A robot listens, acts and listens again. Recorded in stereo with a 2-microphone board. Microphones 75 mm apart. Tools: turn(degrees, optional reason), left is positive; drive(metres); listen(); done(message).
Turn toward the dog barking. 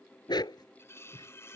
turn(degrees=70, reason="The dog barking: about 70° left or 110° left.")
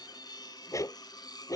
turn(degrees=50, reason="So it is at 50° left.")
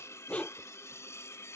turn(degrees=20, reason="The dog barking is now 20° left.")
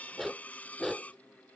done("Found it: a dog barking, straight ahead.")